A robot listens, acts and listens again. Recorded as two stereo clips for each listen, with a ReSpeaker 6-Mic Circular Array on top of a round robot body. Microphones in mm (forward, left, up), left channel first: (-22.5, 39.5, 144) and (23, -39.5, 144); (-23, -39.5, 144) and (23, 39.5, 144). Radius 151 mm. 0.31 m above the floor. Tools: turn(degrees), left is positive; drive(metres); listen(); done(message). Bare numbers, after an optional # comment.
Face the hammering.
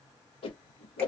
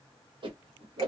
listen()
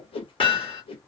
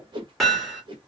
# The hammering: 150° left.
turn(150)
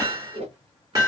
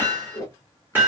# The hammering is now 10° right.
turn(-10)
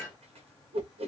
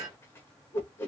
listen()
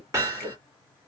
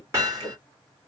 done("Found it: hammering, straight ahead, 1 to 2 m away.")